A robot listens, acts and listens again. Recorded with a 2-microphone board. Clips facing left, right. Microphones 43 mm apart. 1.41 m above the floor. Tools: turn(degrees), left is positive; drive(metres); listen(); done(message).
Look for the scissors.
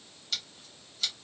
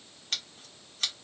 turn(degrees=-45)
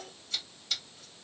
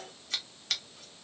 turn(degrees=-85)
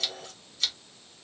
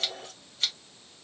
turn(degrees=-20)
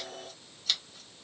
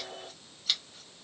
turn(degrees=-10)
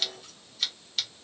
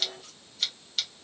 done("Found it: scissors, straight ahead, 1 to 2 m away.")